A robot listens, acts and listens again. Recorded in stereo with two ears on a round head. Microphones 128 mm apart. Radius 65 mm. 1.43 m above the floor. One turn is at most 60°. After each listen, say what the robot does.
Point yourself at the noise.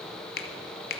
Turn 60° left.
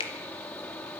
Turn 35° left.
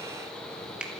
Found it: a finger snap, straight ahead, 1 to 2 m away.